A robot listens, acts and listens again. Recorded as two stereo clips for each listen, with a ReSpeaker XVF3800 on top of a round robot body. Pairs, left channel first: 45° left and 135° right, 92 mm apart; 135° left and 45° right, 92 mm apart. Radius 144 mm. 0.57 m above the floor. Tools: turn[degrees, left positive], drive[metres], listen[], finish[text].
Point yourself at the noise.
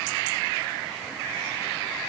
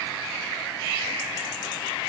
Action: listen[]
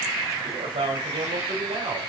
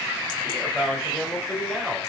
Thought: The man speaking: 130° right.
Action: turn[-130]
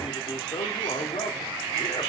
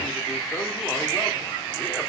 Action: listen[]
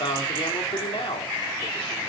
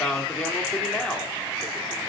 Thought: The man speaking is now 50° left.
Action: turn[50]
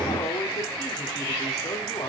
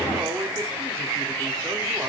Action: listen[]
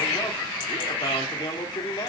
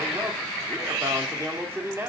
Thought: The man speaking is now 15° left.
Action: turn[15]
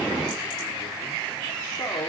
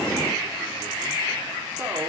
Action: listen[]
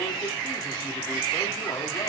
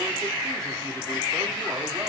Action: listen[]
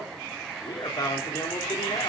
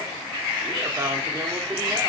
Action: finish[Facing the man speaking, 2 to 4 m away.]